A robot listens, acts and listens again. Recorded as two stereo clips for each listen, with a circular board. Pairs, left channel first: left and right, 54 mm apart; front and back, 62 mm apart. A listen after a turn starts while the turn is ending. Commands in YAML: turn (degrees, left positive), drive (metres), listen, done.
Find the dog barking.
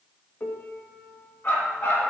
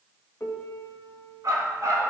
turn: 140
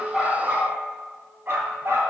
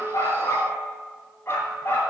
turn: -55
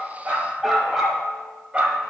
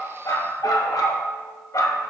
turn: -25
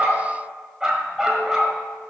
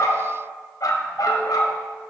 turn: -15
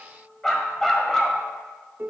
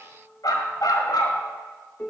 done: "Found it: a dog barking, straight ahead."